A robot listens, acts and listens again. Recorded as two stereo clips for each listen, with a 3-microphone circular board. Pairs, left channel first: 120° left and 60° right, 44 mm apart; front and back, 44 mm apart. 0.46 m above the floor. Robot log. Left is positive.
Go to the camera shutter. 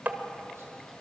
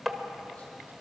cmd idle
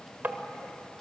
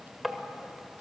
cmd idle
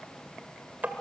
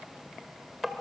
end: I can't make out a camera shutter, only tapping.